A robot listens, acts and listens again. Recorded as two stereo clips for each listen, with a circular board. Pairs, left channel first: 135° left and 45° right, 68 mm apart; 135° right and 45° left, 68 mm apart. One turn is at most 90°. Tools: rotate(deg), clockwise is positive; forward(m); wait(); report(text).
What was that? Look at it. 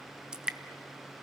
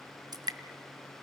rotate(-30)
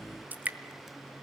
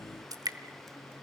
rotate(-20)
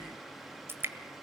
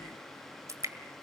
report("Found it: dripping, straight ahead, 1 to 2 m away.")